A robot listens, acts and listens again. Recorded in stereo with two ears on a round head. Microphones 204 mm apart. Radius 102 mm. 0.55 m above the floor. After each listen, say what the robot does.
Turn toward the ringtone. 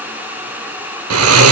Keep listening.
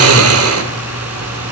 Keep listening.
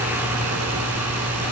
I can't make out a ringtone, only snoring.